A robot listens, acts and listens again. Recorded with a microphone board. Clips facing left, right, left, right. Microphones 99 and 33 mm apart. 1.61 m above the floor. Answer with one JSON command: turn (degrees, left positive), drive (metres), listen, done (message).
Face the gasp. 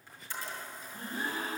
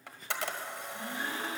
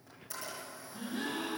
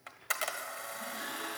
{"turn": 45}
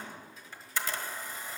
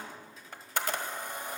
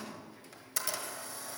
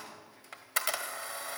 {"listen": true}
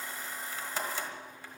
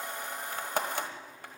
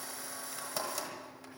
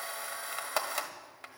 {"done": "I heard a gasp, but can't make it out now. It was about straight ahead or 90° left."}